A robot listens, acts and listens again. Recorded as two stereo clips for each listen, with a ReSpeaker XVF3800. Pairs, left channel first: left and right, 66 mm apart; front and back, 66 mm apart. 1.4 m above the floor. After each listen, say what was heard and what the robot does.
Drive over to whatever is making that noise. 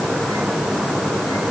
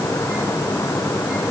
Keep listening.
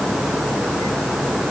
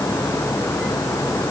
Keep listening.
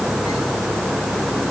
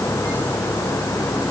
I can't make out anything to turn to.